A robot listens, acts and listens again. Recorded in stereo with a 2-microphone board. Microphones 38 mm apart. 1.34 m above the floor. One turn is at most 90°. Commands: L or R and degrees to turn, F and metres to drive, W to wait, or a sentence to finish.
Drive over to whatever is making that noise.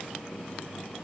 W
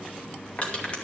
L40
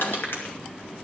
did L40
L90
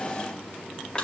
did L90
L20
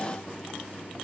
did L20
W
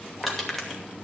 F1.0
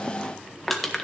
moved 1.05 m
F1.0
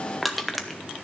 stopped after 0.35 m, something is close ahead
Arrived at the crushing, straight ahead.